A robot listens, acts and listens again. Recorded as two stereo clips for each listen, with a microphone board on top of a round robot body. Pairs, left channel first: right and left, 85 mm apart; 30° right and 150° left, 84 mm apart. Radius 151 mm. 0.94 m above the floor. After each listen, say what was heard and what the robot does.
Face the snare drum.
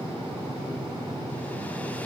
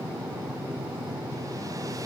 Keep listening.
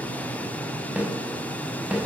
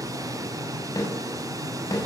The snare drum: 15° left. Turn 15° left.
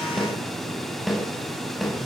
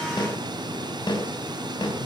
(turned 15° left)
Found it: a snare drum, straight ahead.